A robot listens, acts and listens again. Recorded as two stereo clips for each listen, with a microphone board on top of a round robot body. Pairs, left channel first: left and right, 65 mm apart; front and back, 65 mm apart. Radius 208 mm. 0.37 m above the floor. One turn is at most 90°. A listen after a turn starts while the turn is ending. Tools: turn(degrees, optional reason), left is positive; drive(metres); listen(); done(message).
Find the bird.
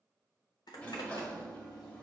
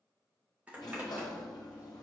listen()
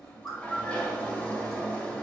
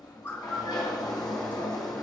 turn(degrees=60, reason="The bird: 60° left.")
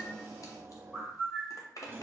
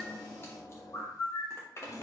done("Facing the bird, 1 to 2 m away.")